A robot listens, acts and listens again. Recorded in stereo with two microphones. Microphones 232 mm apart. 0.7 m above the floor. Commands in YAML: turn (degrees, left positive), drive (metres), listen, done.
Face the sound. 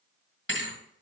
turn: 55
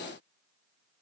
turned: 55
listen: true
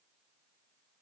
done: "I heard a thud, but can't make it out now. It was about straight ahead or 70° left."